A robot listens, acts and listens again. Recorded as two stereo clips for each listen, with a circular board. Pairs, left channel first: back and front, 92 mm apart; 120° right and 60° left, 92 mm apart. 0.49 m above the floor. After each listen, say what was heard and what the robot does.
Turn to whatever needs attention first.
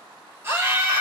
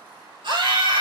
The scream: 55° left. Turn 55° left.
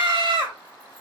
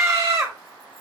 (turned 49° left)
The scream is now 10° left. Turn 10° left.
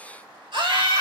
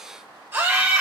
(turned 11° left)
Facing the scream, 2 to 4 m away.